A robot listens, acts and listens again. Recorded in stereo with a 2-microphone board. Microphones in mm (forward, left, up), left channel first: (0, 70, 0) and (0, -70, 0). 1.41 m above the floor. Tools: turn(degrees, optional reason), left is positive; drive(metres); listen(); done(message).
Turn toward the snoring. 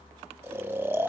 turn(degrees=-30)
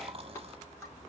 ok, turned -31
turn(degrees=-130, reason="So it is at 130° right.")
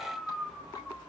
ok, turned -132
done("Found it: snoring, straight ahead, 1 to 2 m away.")